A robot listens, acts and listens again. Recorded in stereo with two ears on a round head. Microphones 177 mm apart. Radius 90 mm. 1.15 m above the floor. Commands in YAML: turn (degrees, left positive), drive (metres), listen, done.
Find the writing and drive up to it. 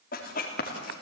turn: 45
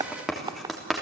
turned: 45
drive: 1.0
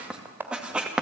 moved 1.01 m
drive: 1.0
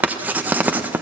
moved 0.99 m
turn: -10
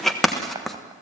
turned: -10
drive: 1.0
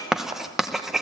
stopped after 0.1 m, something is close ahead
done: "Arrived at the writing, straight ahead."